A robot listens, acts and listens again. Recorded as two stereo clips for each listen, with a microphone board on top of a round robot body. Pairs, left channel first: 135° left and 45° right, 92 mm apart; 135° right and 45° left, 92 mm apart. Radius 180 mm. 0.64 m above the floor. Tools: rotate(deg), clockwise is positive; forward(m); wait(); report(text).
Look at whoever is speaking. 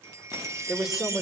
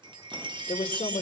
rotate(130)
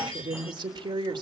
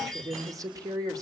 report("Found it: a woman speaking, straight ahead, 2 to 4 m away.")